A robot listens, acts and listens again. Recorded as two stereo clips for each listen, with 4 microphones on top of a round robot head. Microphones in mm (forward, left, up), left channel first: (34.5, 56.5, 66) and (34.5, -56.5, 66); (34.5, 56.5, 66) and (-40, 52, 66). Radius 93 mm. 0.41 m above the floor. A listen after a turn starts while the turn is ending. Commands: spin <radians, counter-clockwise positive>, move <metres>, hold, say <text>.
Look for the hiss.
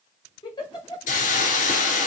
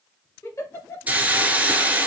spin 2.01
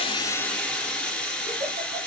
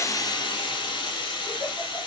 say Facing the hiss.